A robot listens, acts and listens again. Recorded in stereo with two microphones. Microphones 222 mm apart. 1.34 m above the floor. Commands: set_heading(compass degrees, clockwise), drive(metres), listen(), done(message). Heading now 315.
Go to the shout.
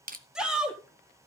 set_heading(345)
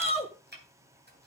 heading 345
set_heading(320)
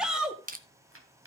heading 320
drive(1.0)
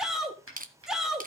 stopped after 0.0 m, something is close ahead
done("Something is in my way. I am facing the shout but have not reached it.")